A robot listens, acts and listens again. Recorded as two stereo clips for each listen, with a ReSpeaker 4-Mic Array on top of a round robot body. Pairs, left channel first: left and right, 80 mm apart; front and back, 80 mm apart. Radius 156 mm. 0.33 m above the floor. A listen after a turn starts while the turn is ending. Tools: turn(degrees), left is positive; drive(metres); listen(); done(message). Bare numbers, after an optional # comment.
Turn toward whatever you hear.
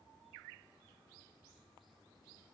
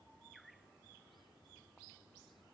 listen()
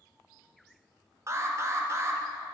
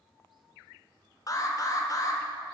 # The alarm: 40° right.
turn(-40)
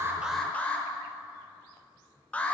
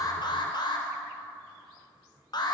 # The alarm is now 20° left.
turn(20)
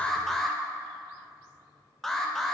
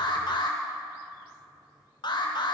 done("Facing the alarm, 1 to 2 m away.")